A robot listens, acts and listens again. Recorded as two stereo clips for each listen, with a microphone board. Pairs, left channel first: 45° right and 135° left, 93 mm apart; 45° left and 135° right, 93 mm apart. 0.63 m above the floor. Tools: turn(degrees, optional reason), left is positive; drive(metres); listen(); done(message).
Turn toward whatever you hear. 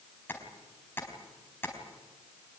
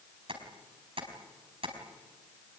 turn(degrees=-115, reason="The tapping: 115° right.")
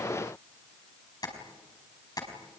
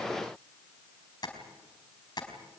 done("Facing the tapping.")